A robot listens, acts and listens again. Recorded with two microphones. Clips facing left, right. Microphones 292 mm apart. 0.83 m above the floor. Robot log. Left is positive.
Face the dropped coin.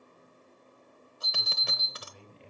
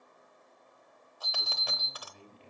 note: The dropped coin: about 25° left or 155° left.
cmd yaw +25
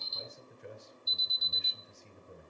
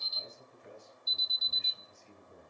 cmd idle
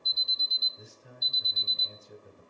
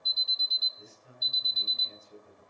end: I heard a dropped coin, but can't make it out now. It was about straight ahead or 130° left.